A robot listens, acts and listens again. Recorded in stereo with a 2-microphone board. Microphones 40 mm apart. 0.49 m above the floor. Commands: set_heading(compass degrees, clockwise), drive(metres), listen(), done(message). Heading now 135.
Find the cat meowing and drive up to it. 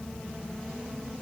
listen()
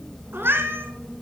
set_heading(210)
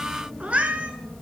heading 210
set_heading(240)
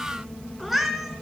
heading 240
drive(1.0)
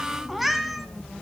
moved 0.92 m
drive(1.0)
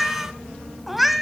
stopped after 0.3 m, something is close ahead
done("I am next to the cat meowing.")